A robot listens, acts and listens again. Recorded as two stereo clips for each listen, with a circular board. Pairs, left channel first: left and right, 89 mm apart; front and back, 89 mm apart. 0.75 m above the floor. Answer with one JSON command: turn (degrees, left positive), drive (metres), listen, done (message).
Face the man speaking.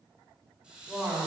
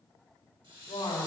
{"done": "Found it: a man speaking, straight ahead."}